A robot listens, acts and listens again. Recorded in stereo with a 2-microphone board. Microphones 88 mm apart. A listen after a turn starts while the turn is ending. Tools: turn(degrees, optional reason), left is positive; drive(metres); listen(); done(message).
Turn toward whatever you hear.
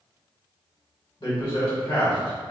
turn(degrees=90)
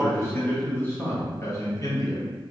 turn(degrees=45, reason="So it is at 45° left.")
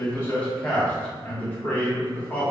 turn(degrees=20, reason="The man speaking is now 20° left.")
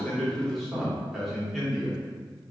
done("Found it: a man speaking, straight ahead.")